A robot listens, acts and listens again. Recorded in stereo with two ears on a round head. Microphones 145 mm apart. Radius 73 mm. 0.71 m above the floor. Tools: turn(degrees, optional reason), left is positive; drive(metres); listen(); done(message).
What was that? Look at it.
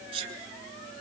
turn(degrees=-35, reason="The sneeze: about 35° right or 145° right.")
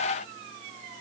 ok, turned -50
listen()
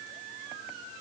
done("I heard a sneeze, but can't make it out now. It was about 15° left or 95° right.")